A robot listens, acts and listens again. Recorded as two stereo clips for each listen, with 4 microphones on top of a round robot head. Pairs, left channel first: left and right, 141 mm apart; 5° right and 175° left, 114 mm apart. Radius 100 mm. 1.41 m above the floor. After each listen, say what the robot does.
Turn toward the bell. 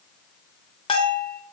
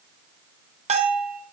Turn 145° left.
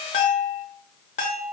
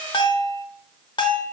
Turn 40° left.
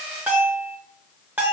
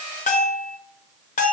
Turn 10° right.
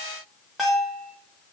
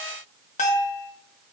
Facing the bell, under 1 m away.